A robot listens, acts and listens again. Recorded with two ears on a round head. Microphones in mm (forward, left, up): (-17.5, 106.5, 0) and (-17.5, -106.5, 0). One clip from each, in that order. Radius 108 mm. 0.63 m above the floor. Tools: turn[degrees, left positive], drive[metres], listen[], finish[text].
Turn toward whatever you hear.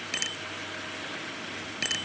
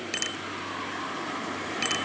Action: turn[-30]
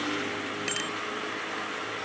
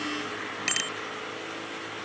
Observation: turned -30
Thought: So it is at 145° right.
Action: turn[-145]
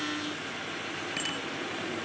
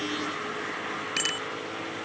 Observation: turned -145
Thought: The bicycle bell is now 40° right.
Action: turn[-40]
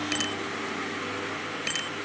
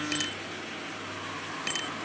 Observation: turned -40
Action: finish[Facing the bicycle bell.]